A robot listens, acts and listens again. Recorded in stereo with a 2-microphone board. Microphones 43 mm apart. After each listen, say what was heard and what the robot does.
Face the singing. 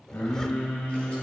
The singing: about 70° left or 110° left. Turn 70° left.
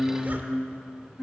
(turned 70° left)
So it is at 25° left. Turn 25° left.
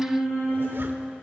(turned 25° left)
Found it: singing, straight ahead, over 4 m away.